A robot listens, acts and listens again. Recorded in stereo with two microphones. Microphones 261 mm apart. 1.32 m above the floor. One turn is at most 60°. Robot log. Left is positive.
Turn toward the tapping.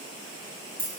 cmd idle
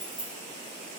cmd idle
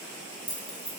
end: I can't make out tapping to turn to.